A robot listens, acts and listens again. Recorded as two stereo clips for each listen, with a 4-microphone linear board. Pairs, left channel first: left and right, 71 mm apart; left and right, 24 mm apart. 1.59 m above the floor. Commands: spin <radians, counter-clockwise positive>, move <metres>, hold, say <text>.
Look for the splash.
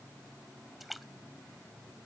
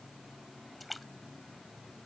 spin 0.52
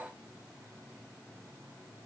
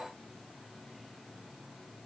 hold
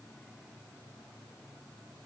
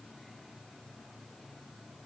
say I heard a splash, but can't make it out now. It was about 30° right or 150° left.